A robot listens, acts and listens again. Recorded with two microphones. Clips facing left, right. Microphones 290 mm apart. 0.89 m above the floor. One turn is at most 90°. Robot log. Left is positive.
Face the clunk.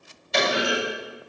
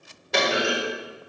note: The clunk: about 75° right or 105° right.
cmd yaw -75
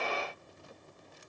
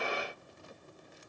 cmd idle
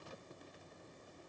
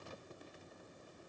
end: I heard a clunk, but can't make it out now. It was about straight ahead or 30° right.